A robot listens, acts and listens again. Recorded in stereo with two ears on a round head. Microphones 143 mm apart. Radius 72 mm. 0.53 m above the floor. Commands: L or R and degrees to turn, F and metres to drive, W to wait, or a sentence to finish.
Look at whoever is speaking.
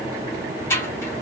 W
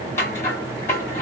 W
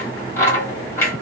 I can't make out anyone speaking, only scissors.